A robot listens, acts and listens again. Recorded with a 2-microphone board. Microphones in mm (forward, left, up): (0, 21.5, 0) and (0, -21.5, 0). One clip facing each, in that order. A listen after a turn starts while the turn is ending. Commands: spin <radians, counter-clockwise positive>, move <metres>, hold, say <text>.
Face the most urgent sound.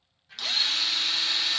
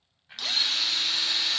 hold
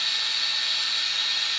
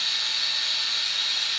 hold
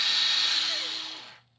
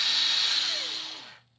say I can't make out anything urgent to turn to.